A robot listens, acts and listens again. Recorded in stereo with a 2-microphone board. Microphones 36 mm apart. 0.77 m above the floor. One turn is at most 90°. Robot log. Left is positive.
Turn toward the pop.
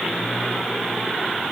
cmd idle
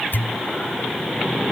note: The pop: about 70° left or 110° left.
cmd yaw +70
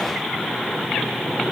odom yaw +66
cmd idle
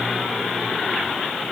end: I heard a pop, but can't make it out now. It was about 5° left or 45° left.